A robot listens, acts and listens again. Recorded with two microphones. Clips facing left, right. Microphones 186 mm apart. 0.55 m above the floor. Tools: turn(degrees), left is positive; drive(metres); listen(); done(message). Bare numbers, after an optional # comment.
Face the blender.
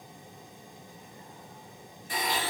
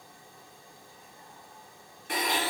# The blender: about 70° right or 110° right.
turn(-70)
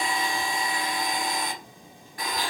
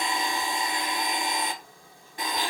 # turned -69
# So it is at 25° right.
turn(-25)
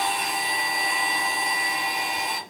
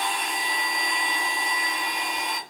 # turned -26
done("Found it: a blender, straight ahead.")